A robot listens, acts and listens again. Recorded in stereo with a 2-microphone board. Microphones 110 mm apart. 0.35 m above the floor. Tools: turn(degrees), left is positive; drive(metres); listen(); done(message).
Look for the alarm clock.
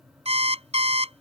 turn(degrees=-90)
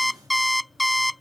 done("Found it: an alarm clock, straight ahead.")